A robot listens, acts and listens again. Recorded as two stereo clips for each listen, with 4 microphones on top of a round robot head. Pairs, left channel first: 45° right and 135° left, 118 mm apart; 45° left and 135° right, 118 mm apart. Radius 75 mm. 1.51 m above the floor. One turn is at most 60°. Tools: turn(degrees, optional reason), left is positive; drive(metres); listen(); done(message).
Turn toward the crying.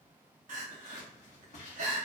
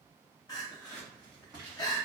turn(degrees=60, reason="The crying: 110° left.")
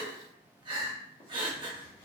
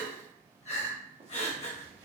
turn(degrees=60, reason="The crying is now 85° left.")
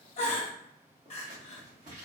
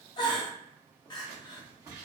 turn(degrees=-10, reason="The crying is now 10° right.")
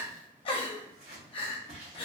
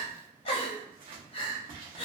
done("Facing the crying.")